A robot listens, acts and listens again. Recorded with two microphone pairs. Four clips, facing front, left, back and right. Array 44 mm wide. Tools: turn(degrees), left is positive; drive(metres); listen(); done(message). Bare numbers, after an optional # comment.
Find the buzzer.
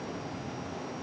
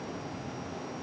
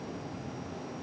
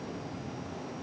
listen()
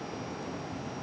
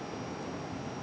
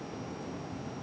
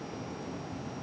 listen()
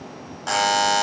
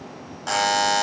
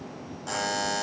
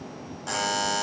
# The buzzer: 25° left.
turn(25)
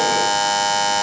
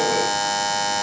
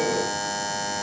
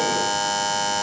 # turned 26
done("Facing the buzzer, under 1 m away.")